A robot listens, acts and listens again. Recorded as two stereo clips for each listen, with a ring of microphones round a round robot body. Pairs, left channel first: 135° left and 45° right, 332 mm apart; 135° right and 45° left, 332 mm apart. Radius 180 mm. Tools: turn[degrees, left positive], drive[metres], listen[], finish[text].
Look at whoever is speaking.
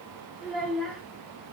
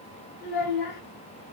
Thought: The child speaking: 135° right.
Action: turn[-135]
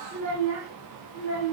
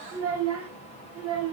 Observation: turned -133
Action: finish[Found it: a child speaking, straight ahead, 1 to 2 m away.]